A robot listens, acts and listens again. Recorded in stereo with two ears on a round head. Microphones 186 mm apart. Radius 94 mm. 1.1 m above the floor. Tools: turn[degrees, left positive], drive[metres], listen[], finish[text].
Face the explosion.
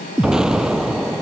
Action: turn[-30]
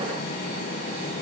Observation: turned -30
Action: listen[]
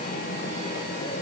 Action: finish[I heard an explosion, but can't make it out now. It was about 25° left or 145° right.]